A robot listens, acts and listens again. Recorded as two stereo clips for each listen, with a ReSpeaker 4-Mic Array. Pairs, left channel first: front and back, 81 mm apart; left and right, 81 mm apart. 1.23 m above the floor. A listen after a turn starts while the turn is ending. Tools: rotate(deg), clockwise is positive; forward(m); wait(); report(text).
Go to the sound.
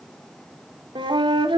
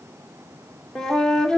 rotate(-175)
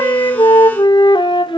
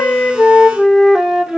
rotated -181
forward(1.0)
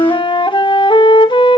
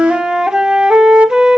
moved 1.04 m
rotate(10)
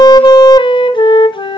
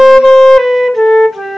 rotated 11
forward(1.0)
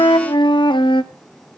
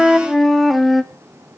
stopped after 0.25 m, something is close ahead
report("Arrived at the flute, straight ahead.")